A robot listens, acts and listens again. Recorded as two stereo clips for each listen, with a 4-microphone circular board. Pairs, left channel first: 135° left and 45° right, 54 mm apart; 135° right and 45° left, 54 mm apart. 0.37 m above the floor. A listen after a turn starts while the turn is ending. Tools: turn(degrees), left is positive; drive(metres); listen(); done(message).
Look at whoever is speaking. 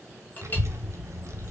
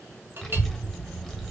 turn(degrees=-50)
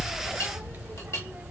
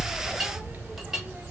done("Found it: a child speaking, straight ahead, 1 to 2 m away.")